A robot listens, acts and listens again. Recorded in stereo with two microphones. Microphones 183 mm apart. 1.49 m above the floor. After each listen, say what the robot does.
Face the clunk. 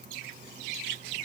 Keep listening.
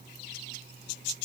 Keep listening.
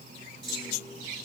Turn 75° left.
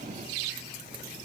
Keep listening.
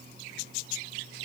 I heard a clunk, but can't make it out now. It was about straight ahead or 30° left.